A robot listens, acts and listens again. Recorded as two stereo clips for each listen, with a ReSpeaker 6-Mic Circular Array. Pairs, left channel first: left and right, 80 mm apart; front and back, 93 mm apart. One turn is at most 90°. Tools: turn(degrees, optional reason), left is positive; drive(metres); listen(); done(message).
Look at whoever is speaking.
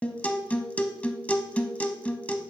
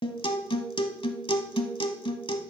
listen()
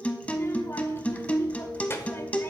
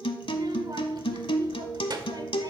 turn(degrees=90, reason="The child speaking: 145° left.")
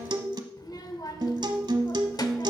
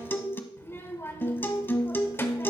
turn(degrees=60, reason="The child speaking is now 60° left.")
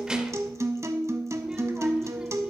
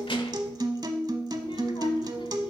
listen()
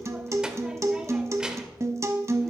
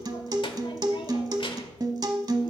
turn(degrees=-10, reason="The child speaking is now 10° right.")
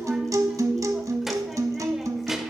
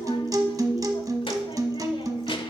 listen()
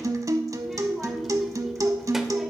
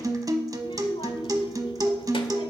listen()
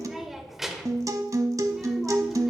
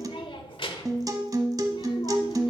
done("Facing the child speaking, 1 to 2 m away.")